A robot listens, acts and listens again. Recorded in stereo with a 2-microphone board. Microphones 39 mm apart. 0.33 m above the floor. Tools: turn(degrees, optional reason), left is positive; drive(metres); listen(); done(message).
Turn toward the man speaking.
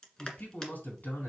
turn(degrees=50, reason="The man speaking: about 50° left or 130° left.")
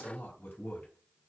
turn(degrees=70, reason="So it is at 70° left.")
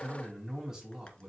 turn(degrees=-15, reason="The man speaking is now 15° right.")
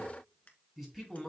done("Facing the man speaking.")